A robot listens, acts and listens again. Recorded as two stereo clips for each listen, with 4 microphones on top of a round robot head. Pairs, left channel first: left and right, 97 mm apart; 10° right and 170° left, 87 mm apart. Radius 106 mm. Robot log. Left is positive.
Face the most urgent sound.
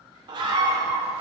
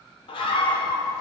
note: The scream: 40° right.
cmd yaw -40
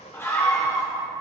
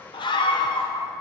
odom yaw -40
note: The scream is now 25° left.
cmd yaw +25
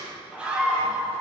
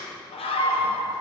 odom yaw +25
note: The scream is now 10° right.
cmd yaw -10
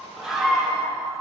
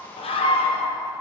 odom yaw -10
end: Facing the scream.